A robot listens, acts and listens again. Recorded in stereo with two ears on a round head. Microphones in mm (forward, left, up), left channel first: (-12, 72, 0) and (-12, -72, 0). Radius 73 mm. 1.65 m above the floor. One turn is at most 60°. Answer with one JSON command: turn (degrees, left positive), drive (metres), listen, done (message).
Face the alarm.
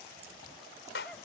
{"listen": true}
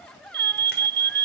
{"turn": -60}
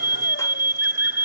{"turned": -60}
{"turn": -15}
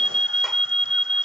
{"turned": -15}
{"done": "Found it: an alarm, straight ahead."}